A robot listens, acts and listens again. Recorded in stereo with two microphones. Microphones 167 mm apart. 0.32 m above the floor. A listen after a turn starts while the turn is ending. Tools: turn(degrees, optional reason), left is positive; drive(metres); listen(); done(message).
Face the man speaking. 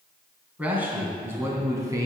turn(degrees=-20, reason="The man speaking: about 20° right or 160° right.")
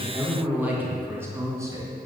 turn(degrees=-20, reason="The man speaking: about 20° right or 160° right.")
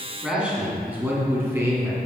turn(degrees=-15, reason="The man speaking: about 15° right or 165° right.")
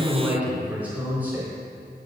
turn(degrees=-30)
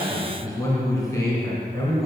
turn(degrees=20, reason="So it is at 20° left.")
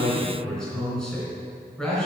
done("Found it: a man speaking, straight ahead, 2 to 4 m away.")